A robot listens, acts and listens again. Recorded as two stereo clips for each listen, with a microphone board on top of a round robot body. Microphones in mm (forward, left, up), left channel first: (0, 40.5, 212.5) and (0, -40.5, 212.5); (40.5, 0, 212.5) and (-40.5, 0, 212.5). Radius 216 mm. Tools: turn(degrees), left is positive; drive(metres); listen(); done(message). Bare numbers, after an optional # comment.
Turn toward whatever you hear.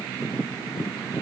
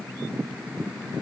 listen()
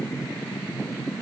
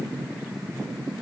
listen()
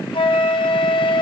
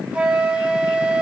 # The flute: 105° left.
turn(105)
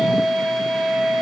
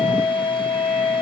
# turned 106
done("Found it: a flute, straight ahead, 1 to 2 m away.")